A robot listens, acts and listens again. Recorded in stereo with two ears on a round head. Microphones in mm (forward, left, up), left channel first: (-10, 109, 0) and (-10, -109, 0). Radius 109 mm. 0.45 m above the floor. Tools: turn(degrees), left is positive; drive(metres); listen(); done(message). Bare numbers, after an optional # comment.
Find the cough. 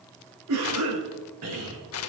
# The cough: about 70° right or 110° right.
turn(-70)
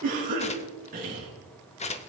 # So it is at 35° right.
turn(-35)
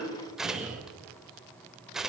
done("Facing the cough, over 4 m away.")